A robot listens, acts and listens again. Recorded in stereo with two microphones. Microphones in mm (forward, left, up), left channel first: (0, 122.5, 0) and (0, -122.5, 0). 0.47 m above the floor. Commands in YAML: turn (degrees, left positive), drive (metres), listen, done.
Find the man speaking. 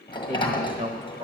turn: -25
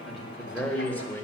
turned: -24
turn: 10
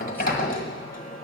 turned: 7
listen: true
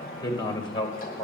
turn: 25
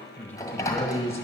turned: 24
turn: 10
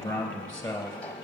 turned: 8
done: "Found it: a man speaking, straight ahead."